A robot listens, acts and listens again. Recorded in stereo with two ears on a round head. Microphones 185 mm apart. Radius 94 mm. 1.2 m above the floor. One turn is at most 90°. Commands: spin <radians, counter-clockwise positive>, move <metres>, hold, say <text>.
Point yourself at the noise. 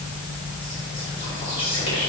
spin 0.52
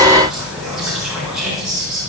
say Found it: whispering, straight ahead.